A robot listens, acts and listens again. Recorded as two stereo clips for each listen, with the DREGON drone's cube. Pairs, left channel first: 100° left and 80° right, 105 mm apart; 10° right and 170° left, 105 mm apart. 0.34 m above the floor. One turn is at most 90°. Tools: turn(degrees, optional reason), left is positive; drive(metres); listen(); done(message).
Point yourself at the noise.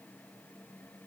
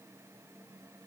listen()
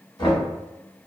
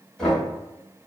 turn(degrees=70, reason="The knocking: 70° left.")
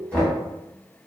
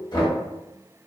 turn(degrees=25, reason="The knocking is now 25° left.")
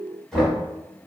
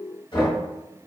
turn(degrees=15, reason="The knocking is now 15° left.")
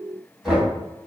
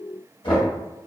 done("Facing the knocking, 1 to 2 m away.")